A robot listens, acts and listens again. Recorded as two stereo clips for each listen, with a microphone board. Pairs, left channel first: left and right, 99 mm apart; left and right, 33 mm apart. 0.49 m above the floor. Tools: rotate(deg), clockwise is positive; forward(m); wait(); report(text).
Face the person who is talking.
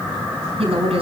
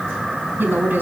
rotate(75)
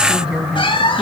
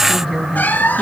rotate(10)
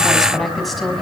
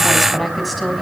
report("Found it: a woman speaking, straight ahead.")